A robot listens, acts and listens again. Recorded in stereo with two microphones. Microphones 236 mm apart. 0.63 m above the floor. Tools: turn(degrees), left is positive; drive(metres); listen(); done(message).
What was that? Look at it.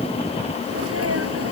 turn(degrees=-90)
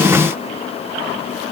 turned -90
done("I heard a sneeze from this way, but can't make it out now.")